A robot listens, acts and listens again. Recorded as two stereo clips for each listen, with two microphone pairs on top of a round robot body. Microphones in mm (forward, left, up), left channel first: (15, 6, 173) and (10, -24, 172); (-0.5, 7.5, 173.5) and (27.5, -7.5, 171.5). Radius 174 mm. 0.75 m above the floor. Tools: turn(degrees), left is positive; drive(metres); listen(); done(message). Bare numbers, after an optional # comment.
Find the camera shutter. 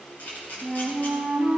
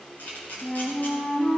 # The camera shutter: 120° left.
turn(120)
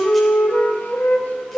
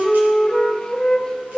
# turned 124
listen()
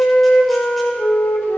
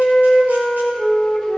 listen()
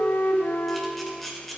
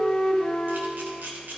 done("Found it: a camera shutter, straight ahead.")